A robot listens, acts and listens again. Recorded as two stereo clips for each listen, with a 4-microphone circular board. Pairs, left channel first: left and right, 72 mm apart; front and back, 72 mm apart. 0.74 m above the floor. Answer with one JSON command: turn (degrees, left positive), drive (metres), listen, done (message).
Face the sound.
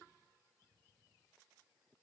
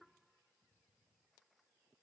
{"listen": true}
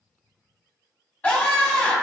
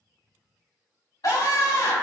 {"turn": 25}
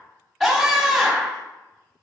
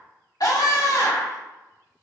{"done": "Facing the scream."}